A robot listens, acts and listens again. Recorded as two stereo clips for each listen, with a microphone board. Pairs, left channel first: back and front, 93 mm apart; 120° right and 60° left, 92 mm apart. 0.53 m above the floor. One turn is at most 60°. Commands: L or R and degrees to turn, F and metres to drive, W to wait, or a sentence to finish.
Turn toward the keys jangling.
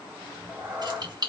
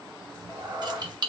L30
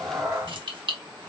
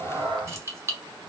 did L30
Facing the keys jangling.